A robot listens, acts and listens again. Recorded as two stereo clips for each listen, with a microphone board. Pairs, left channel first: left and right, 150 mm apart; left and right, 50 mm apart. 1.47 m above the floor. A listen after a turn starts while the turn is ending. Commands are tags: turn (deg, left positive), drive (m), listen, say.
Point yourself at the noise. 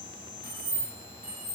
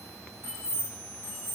<turn deg="-65"/>
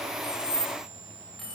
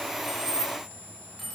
<say>Facing the keys jangling, 1 to 2 m away.</say>